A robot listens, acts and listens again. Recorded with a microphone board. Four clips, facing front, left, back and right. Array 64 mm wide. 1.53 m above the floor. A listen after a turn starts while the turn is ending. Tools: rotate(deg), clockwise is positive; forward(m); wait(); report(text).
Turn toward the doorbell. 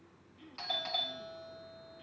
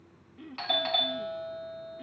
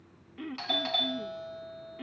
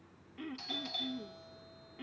rotate(-105)
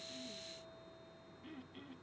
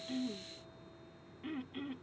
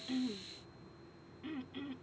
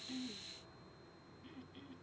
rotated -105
wait()
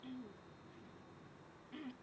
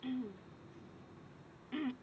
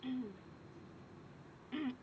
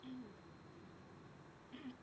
wait()
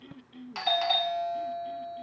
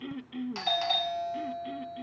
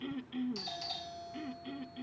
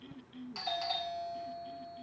rotate(-25)
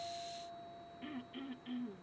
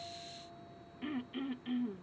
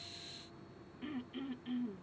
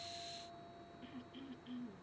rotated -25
wait()
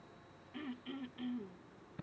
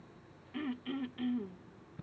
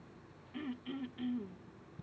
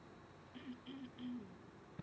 report("Found it: a doorbell, straight ahead.")